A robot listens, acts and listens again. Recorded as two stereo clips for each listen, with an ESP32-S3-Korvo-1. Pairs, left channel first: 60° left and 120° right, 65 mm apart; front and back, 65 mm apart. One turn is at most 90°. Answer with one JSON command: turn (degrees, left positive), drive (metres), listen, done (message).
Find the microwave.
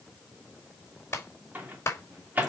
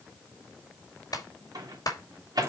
{"turn": 90}
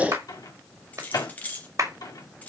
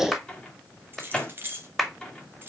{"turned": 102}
{"turn": 75}
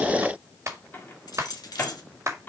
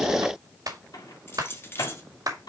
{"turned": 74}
{"done": "Facing the microwave."}